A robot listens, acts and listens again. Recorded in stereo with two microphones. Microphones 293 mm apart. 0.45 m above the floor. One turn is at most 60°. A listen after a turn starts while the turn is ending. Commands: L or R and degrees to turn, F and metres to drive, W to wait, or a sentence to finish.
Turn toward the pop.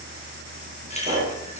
R25
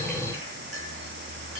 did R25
W
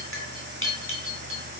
I heard a pop, but can't make it out now. It was about straight ahead or 130° right.